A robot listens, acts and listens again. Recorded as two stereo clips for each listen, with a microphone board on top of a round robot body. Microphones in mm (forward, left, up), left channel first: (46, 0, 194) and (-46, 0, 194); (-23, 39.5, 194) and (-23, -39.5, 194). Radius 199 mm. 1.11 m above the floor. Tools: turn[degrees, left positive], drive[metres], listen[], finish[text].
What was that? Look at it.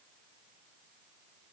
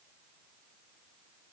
Action: listen[]
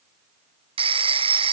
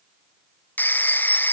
Thought: The phone ringing: 155° left.
Action: turn[155]
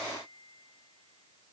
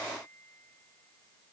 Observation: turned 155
Action: listen[]
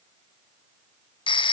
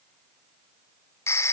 Thought: The phone ringing is now 30° left.
Action: turn[30]
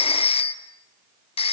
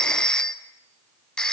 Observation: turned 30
Thought: The phone ringing is now 10° left.
Action: turn[10]
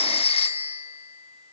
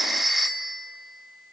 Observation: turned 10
Action: finish[Facing the phone ringing.]